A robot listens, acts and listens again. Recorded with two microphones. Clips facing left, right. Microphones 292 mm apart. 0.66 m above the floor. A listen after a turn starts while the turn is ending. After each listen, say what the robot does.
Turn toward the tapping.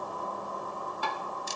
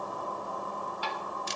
Turn 55° left.
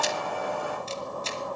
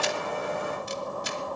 Keep listening.
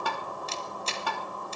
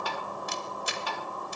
Turn 65° left.
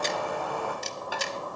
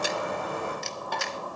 Facing the tapping.